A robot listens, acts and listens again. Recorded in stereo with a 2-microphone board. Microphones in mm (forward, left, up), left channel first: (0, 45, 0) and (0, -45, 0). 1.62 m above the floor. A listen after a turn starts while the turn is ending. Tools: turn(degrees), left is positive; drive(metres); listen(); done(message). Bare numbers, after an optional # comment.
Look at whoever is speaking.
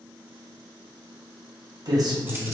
# The man speaking: about 35° right or 145° right.
turn(-35)
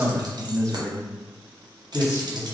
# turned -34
# So it is at 40° left.
turn(40)
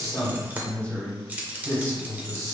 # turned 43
# The man speaking is now 30° left.
turn(30)
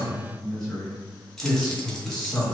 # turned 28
done("Found it: a man speaking, straight ahead, 1 to 2 m away.")